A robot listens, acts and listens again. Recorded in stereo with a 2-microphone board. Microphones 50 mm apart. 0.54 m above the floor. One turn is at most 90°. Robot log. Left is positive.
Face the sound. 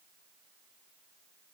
cmd idle
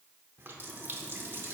note: The running tap: about 50° right or 130° right.
cmd yaw -50
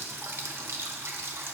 note: So it is at 70° right.
cmd yaw -70
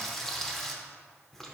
end: Facing the running tap, under 1 m away.